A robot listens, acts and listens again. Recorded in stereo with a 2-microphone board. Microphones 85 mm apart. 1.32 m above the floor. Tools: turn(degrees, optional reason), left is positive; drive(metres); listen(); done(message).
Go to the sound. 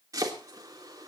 turn(degrees=-45, reason="The chopping: about 45° right or 135° right.")
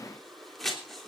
drive(metres=1.0)
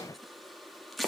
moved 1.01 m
drive(metres=1.0)
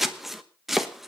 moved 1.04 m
drive(metres=1.0)
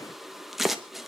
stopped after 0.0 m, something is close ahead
done("I am next to the chopping.")